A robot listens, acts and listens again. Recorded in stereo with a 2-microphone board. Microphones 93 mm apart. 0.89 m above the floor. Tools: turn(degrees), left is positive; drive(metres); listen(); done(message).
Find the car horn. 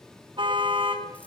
turn(degrees=-65)
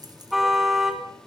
done("Facing the car horn, 2 to 4 m away.")